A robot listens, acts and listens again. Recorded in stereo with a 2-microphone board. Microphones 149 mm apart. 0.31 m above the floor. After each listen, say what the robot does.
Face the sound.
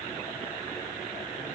Keep listening.
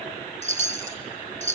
Turn 55° right.
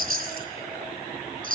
Turn 75° right.
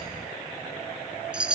Found it: a chime, straight ahead.